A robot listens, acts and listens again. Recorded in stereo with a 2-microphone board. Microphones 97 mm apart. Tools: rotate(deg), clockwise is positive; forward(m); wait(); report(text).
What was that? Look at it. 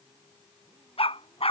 rotate(-90)
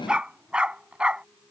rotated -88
rotate(10)
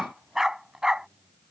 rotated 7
report("Found it: a dog barking, straight ahead.")